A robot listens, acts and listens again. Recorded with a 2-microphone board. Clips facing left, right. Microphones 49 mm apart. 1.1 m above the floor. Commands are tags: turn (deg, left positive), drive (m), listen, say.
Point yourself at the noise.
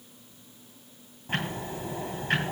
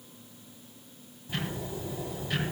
<turn deg="45"/>
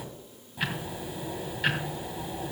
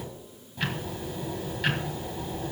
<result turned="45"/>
<say>Found it: ticking, straight ahead.</say>